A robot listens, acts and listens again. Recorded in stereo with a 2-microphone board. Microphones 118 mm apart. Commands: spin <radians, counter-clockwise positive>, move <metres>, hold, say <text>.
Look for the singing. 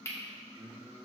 spin -0.61
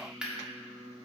spin -1.83
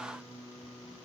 spin -0.52
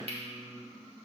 hold
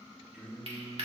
spin -0.17
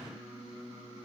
say Facing the singing, 2 to 4 m away.